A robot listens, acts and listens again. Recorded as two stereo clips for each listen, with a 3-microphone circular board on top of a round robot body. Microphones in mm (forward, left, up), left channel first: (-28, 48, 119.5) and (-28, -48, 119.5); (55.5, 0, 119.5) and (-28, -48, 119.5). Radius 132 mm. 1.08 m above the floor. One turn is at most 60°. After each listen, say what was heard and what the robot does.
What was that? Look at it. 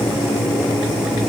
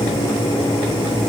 Keep listening.
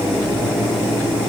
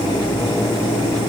Keep listening.
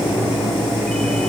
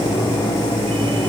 I can't make out anything to turn to.